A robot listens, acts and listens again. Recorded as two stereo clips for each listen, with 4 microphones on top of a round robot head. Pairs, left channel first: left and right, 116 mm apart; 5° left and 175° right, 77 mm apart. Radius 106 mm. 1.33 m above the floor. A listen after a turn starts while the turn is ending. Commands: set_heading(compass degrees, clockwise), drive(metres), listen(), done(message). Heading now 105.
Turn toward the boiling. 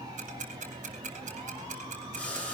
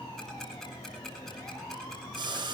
set_heading(295)
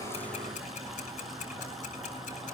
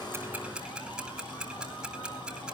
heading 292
listen()
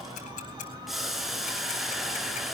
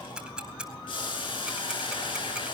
done("Facing the boiling, over 4 m away.")